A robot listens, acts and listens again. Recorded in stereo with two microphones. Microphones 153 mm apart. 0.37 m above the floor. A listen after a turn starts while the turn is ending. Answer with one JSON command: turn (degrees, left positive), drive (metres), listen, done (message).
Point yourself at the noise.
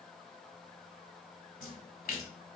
{"turn": 65}
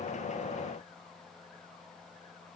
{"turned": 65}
{"listen": true}
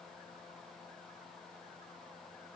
{"done": "I heard a splash, but can't make it out now. It was about straight ahead or 50° left."}